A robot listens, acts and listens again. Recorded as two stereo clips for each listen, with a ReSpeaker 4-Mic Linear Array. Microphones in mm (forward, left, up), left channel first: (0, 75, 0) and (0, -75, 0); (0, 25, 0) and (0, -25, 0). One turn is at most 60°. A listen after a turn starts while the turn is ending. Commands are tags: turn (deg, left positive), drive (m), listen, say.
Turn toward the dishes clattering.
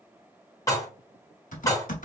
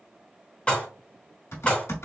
<turn deg="25"/>
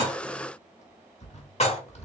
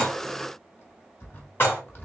<turn deg="60"/>
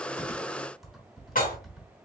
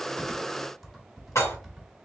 <turn deg="60"/>
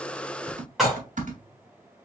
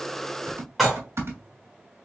<say>Facing the dishes clattering.</say>